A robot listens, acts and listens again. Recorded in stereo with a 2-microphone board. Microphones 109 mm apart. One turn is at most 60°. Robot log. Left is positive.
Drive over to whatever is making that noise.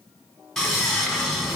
cmd yaw +30
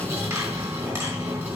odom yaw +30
note: So it is at 25° right.
cmd yaw -25
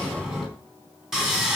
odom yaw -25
cmd fwd 1.0
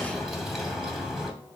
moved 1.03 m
cmd fwd 1.0
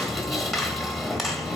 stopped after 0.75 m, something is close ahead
end: Arrived at the sawing, straight ahead.